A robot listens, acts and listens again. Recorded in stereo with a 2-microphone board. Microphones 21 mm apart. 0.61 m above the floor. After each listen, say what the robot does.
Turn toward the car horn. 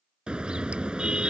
Turn 50° right.
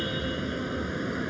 Facing the car horn.